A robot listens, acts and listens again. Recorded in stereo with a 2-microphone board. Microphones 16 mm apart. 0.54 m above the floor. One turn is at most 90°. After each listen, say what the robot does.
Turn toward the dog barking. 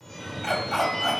Turn 30° left.
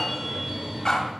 Turn 90° left.
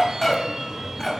Turn 15° left.
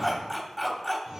Found it: a dog barking, straight ahead.